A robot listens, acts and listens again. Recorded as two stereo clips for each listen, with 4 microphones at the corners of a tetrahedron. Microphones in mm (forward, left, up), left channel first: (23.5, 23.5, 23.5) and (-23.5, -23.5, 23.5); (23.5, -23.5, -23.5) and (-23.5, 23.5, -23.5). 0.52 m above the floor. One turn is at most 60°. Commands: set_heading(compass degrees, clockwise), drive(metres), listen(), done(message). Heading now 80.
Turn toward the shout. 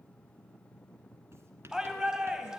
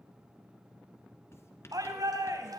set_heading(20)
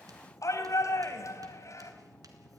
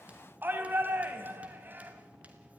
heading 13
set_heading(313)
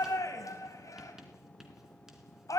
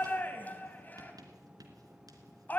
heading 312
set_heading(292)
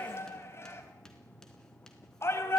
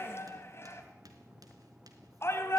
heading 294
done("Found it: a shout, straight ahead.")